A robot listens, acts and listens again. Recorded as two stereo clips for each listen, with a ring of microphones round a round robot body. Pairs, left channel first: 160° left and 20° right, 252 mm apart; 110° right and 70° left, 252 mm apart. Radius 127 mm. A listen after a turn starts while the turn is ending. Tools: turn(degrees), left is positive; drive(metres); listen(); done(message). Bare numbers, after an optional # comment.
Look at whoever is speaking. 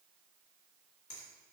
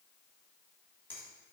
listen()
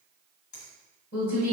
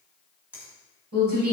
# The woman speaking: 110° left.
turn(110)
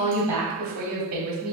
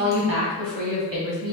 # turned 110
# The woman speaking is now 25° left.
turn(25)
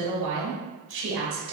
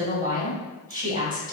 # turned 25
done("Facing the woman speaking.")